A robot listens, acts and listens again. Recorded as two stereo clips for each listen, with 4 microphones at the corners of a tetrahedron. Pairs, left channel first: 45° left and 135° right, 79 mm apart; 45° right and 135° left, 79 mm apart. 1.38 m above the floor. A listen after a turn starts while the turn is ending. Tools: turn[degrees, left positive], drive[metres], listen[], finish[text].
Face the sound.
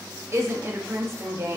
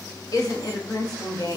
Thought: The woman speaking: 80° right.
Action: turn[-80]
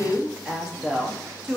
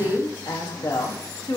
Thought: The woman speaking is now 55° right.
Action: turn[-55]
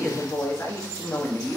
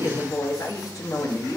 Action: finish[Facing the woman speaking.]